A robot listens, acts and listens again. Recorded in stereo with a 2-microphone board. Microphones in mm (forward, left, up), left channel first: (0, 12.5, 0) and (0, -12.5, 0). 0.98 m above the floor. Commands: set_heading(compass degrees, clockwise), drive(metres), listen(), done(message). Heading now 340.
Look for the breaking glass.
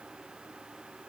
listen()
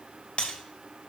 set_heading(300)
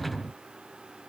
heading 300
listen()
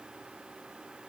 done("I heard breaking glass, but can't make it out now. It was about straight ahead or 100° left.")